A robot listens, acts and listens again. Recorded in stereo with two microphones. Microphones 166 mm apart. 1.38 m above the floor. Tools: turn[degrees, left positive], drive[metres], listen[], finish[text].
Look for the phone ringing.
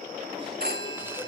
Thought: The phone ringing: about 70° right or 110° right.
Action: turn[-70]
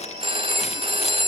Thought: So it is at 35° right.
Action: turn[-35]
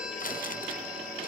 Action: listen[]
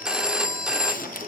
Action: finish[Found it: a phone ringing, straight ahead.]